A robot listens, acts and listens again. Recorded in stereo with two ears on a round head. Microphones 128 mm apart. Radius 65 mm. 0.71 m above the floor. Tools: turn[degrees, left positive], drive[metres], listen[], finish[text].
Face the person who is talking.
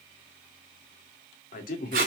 Thought: The man speaking: about 65° left or 115° left.
Action: turn[65]
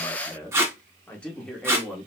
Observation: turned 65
Action: finish[Found it: a man speaking, straight ahead.]